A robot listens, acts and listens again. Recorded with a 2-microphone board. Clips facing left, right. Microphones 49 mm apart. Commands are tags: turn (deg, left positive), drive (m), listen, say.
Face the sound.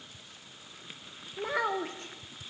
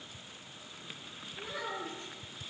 <turn deg="55"/>
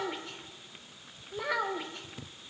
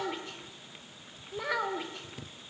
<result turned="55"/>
<say>Found it: a child speaking, straight ahead.</say>